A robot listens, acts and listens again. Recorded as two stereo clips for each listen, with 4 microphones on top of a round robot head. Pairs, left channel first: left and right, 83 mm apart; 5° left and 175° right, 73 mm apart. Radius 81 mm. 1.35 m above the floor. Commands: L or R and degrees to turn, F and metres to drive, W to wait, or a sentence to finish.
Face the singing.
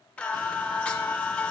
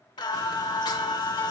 L15
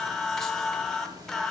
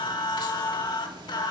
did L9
Facing the singing.